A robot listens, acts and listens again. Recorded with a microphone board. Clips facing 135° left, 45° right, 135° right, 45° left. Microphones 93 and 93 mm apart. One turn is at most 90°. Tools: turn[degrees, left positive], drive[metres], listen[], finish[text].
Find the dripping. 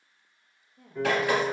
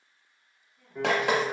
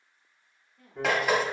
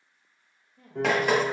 Thought: The dripping: 45° right.
Action: turn[-45]
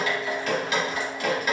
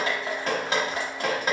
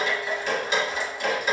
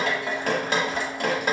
Thought: The dripping is now 10° left.
Action: turn[10]
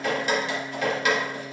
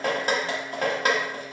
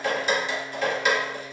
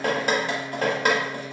Action: finish[Facing the dripping.]